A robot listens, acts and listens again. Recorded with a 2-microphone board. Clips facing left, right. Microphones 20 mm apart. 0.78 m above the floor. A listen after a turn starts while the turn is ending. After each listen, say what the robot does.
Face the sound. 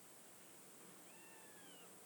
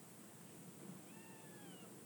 Keep listening.
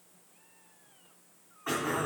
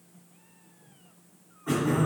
Turn 65° left.
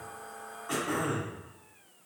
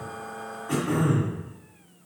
Turn 10° left.
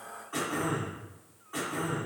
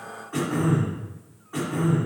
Facing the throat clearing, 2 to 4 m away.